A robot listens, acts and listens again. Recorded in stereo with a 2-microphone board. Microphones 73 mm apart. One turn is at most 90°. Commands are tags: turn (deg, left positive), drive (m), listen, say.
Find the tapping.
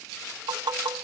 <turn deg="-90"/>
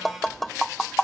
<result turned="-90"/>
<say>Found it: tapping, straight ahead.</say>